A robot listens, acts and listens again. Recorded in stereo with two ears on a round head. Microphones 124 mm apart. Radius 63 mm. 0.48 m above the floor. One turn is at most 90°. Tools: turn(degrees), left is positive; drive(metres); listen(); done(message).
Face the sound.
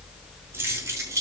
turn(degrees=-25)
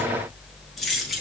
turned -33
done("Facing the keys jangling.")